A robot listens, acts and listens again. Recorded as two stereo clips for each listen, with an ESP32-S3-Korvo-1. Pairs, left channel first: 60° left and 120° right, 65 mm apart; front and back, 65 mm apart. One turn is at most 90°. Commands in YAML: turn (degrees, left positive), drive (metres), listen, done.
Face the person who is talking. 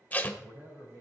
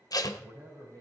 turn: -90
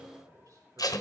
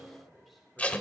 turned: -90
turn: -90
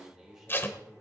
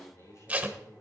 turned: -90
turn: -40
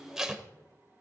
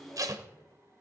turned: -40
listen: true
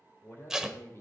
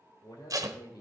turn: 10
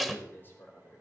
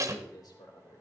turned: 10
done: "Found it: a man speaking, straight ahead, 2 to 4 m away."